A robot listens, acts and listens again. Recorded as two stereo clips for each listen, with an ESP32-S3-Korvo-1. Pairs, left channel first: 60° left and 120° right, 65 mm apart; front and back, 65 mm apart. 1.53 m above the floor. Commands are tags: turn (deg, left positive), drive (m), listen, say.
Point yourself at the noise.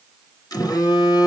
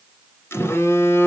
<turn deg="50"/>
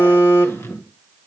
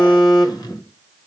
<turn deg="10"/>
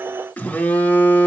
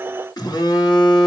<say>Facing the phone buzzing.</say>